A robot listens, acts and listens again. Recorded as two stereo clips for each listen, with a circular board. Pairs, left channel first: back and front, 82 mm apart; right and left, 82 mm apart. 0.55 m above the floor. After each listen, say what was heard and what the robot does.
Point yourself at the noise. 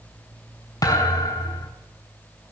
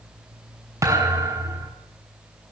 The thud: 140° left. Turn 140° left.
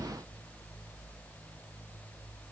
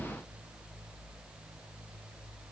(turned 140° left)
Facing where the thud came from. I can't hear it now.